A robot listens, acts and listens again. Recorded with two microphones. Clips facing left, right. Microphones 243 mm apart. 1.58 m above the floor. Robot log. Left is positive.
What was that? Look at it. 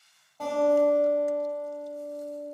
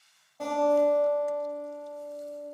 cmd yaw -30
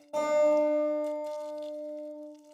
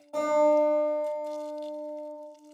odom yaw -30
note: So it is at 20° left.
cmd yaw +20
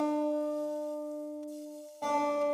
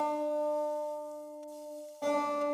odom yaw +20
end: Facing the guitar, 1 to 2 m away.